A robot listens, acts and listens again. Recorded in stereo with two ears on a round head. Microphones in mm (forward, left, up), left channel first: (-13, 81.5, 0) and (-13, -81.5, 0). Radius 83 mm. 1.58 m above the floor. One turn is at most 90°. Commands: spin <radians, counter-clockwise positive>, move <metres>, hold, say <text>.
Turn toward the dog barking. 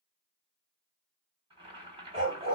spin -0.61
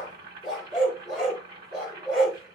say Facing the dog barking.